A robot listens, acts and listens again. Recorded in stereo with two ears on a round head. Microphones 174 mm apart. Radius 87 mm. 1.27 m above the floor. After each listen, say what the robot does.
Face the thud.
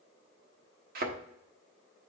Turn 50° right.
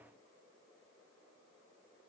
Keep listening.
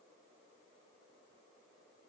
I heard a thud, but can't make it out now. It was about straight ahead or 80° right.